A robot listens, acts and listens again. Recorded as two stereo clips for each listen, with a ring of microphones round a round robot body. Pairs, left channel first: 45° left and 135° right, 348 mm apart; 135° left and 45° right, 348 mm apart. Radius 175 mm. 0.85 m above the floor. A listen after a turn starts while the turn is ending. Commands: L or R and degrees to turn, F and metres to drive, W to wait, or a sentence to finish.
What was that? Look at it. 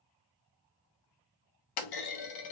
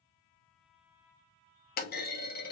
L70
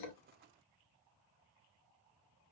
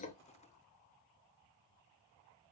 I heard a clunk from this way, but can't make it out now.